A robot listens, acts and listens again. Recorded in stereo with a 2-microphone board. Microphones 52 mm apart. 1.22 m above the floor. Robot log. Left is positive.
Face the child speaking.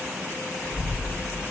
note: The child speaking: about 65° left or 115° left.
cmd yaw +65
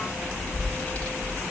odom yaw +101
note: So it is at 25° left.
cmd yaw +25
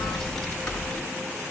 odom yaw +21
note: The child speaking is now 15° left.
cmd yaw +15
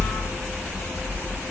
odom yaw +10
note: The child speaking is now 10° left.
cmd yaw +10
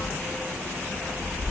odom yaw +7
end: Found it: a child speaking, straight ahead.